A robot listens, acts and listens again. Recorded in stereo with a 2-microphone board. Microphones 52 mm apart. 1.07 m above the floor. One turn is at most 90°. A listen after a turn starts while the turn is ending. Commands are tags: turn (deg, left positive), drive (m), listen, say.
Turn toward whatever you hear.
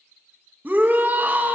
<turn deg="-35"/>
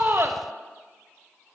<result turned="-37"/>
<listen/>
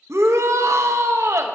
<turn deg="-90"/>
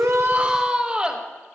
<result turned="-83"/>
<turn deg="-20"/>
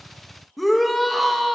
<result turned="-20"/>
<say>Facing the shout, 1 to 2 m away.</say>